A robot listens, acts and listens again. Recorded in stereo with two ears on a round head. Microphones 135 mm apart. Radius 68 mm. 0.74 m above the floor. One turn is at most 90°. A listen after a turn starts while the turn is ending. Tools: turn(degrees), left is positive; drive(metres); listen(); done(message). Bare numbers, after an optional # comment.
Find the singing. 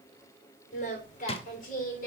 # The singing: about 60° left or 120° left.
turn(60)
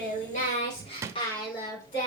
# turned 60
# So it is at 30° left.
turn(30)
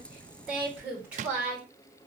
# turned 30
# The singing is now 10° right.
turn(-10)
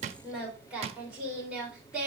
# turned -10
done("Facing the singing.")